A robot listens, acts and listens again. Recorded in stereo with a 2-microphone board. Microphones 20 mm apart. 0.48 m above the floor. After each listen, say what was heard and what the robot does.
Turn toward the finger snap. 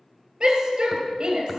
Keep listening.
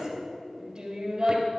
Keep listening.
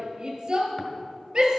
I can't make out a finger snap, only a shout.